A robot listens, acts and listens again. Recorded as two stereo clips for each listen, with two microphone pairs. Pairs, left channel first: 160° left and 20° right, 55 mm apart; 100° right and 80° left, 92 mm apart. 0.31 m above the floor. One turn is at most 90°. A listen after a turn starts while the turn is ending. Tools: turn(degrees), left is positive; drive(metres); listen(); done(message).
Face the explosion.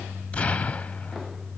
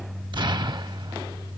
turn(degrees=90)
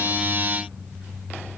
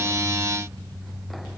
done("Facing where the explosion came from. I can't hear it now.")